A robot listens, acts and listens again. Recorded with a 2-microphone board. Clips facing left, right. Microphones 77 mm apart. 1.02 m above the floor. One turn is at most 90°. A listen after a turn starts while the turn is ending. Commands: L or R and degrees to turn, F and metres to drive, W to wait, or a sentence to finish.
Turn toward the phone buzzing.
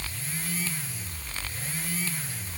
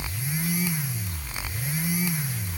W
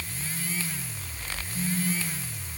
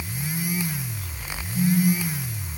R30
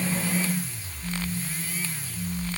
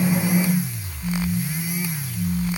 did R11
R20
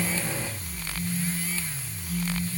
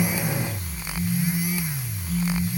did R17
Found it: a phone buzzing, straight ahead.